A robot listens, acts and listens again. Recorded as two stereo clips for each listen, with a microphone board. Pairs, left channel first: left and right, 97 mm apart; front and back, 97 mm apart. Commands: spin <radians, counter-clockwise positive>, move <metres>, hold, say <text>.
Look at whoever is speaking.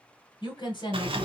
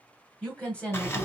spin 1.22
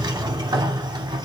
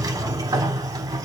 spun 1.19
hold
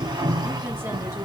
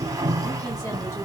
hold
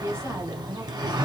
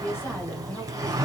spin -1.05
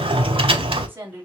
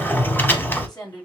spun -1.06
spin -0.44
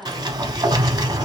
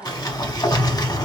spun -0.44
say Facing the woman speaking, 2 to 4 m away.